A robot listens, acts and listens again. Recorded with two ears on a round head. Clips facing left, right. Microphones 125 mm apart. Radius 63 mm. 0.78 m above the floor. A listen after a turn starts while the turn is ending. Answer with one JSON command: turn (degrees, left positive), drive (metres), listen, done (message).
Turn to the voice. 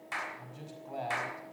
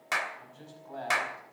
{"turn": 15}
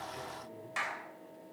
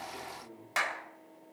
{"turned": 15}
{"listen": true}
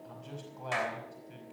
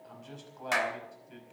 {"done": "Facing the man speaking."}